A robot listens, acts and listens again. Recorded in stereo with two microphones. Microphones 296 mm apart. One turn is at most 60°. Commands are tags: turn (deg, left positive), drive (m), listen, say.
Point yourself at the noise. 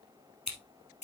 <turn deg="60"/>
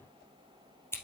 <turn deg="10"/>
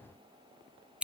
<say>Facing the scissors, 2 to 4 m away.</say>